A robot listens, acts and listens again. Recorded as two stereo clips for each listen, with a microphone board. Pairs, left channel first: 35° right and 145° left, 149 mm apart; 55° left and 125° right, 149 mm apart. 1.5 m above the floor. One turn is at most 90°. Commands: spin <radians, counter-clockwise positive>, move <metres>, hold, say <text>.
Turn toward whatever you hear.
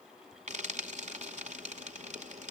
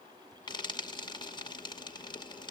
spin 1.57
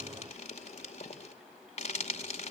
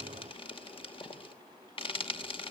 say Facing the frying, 2 to 4 m away.